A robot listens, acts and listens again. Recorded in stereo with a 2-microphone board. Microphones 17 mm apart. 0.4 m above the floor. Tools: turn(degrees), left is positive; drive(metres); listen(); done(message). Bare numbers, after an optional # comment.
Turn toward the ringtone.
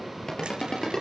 # The ringtone: about 35° left or 145° left.
turn(35)
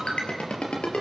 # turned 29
# So it is at 115° left.
turn(115)
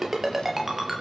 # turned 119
done("Found it: a ringtone, straight ahead, over 4 m away.")